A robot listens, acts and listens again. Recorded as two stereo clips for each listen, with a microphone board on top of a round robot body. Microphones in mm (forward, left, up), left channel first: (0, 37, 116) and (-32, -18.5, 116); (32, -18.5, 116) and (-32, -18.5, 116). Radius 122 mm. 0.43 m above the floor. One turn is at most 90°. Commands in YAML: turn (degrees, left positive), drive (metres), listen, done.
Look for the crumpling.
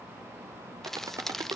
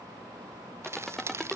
turn: 90
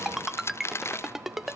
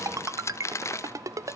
turn: 25
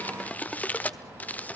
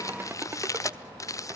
done: "Found it: crumpling, straight ahead, 1 to 2 m away."